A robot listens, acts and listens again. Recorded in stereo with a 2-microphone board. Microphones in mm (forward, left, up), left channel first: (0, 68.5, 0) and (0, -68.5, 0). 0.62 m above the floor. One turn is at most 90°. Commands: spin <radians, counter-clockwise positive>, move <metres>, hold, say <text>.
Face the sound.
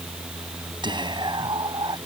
spin -0.61
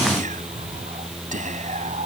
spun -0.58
spin -1.57
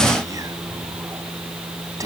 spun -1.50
spin -0.44
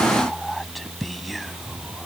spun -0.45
say Facing the whispering.